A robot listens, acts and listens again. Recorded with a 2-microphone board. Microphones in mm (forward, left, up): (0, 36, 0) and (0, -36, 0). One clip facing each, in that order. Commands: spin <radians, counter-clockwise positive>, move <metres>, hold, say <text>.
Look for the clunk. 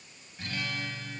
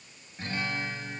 hold
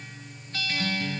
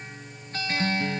hold
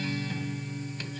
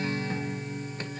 say I can't make out a clunk, only a guitar.